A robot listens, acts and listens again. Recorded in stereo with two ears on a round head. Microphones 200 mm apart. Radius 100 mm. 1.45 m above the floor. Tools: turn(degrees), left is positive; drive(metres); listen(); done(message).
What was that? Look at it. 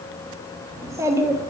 turn(degrees=-30)
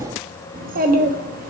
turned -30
turn(degrees=-135)
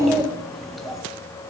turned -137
done("Found it: a child speaking, straight ahead.")